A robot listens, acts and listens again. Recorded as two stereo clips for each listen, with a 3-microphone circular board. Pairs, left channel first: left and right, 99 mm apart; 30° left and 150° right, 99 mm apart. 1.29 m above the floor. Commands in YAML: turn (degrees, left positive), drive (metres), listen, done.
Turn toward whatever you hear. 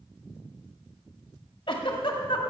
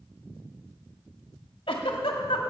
turn: 60
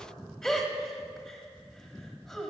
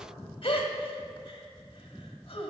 done: "Facing the giggle, 1 to 2 m away."